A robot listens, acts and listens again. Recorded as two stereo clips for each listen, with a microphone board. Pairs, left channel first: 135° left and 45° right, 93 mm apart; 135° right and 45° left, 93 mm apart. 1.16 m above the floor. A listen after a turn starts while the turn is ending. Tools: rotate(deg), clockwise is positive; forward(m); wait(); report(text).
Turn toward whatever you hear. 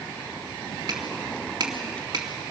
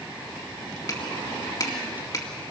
rotate(90)
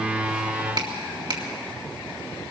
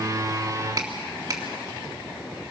report("Found it: a finger snap, straight ahead, 2 to 4 m away.")